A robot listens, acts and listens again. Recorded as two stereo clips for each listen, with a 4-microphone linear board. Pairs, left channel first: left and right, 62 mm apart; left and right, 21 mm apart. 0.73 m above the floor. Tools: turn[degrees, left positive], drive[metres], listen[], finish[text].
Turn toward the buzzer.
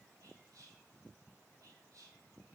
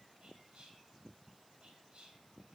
Action: listen[]
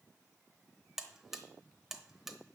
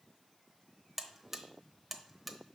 Action: turn[-30]
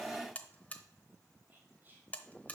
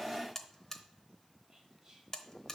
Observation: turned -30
Thought: So it is at 25° left.
Action: turn[25]
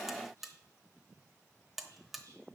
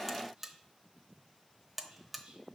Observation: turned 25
Action: finish[Found it: a buzzer, straight ahead.]